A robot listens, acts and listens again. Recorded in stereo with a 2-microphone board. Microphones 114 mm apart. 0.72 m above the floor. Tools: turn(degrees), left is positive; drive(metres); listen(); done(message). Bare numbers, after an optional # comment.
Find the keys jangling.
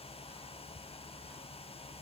listen()
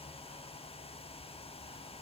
listen()
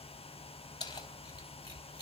# The keys jangling: about 40° left or 140° left.
turn(40)
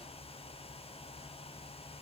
listen()
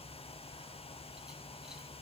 listen()
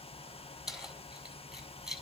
done("Found it: keys jangling, straight ahead, over 4 m away.")